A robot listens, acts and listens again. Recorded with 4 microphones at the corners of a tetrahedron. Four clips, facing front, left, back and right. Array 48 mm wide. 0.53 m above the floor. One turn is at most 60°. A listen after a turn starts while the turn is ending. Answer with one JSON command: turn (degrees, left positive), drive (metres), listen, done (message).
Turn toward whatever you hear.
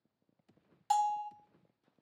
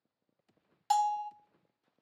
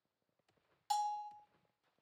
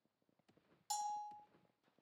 {"turn": 60}
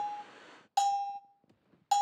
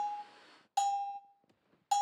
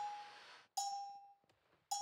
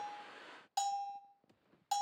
{"turn": 10}
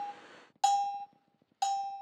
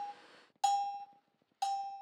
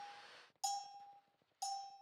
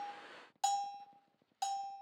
{"done": "Facing the bell, under 1 m away."}